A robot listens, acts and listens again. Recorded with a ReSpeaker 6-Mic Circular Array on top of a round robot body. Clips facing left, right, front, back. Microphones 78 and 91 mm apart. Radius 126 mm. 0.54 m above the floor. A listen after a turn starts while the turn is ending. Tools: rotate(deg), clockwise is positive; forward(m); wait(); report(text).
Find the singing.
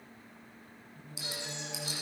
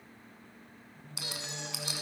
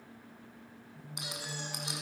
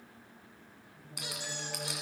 rotate(-10)
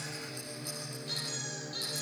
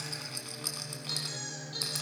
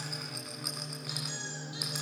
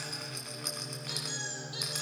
report("Found it: singing, straight ahead, over 4 m away.")